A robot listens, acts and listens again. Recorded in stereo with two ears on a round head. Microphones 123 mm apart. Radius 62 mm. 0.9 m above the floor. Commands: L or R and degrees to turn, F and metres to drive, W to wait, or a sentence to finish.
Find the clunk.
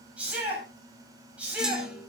R30
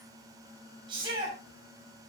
W
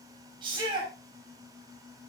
I heard a clunk, but can't make it out now. It was about 25° left or 145° right.